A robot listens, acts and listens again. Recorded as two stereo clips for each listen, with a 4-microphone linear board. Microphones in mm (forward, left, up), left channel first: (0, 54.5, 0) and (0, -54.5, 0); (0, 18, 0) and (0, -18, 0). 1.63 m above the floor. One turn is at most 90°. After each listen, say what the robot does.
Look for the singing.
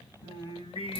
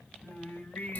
Turn 65° left.
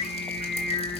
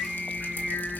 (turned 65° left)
Turn 10° left.
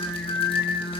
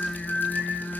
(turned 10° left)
Facing the singing, over 4 m away.